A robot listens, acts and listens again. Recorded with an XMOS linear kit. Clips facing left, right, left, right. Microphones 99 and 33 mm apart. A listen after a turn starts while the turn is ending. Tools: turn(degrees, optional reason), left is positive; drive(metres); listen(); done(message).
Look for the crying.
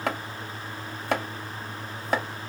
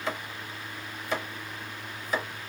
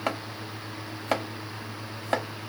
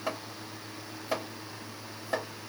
listen()
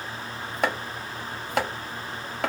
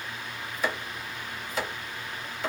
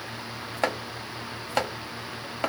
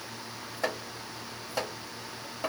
listen()
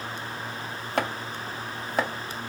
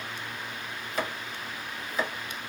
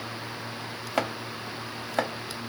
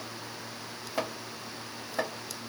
done("I can't make out crying, only chopping.")